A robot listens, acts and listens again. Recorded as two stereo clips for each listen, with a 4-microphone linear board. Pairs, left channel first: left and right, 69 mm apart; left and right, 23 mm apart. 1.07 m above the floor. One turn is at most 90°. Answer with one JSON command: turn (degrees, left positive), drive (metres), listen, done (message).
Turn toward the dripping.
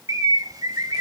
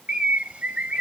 {"listen": true}
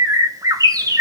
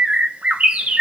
{"listen": true}
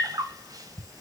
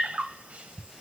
{"done": "I can't make out dripping to turn to."}